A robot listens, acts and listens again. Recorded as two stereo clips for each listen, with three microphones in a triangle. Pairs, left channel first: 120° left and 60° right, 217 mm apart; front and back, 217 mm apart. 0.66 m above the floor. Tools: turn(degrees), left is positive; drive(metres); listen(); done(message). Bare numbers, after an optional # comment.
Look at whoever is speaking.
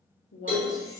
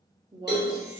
# The woman speaking: 110° left.
turn(110)
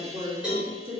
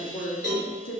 done("Found it: a woman speaking, straight ahead.")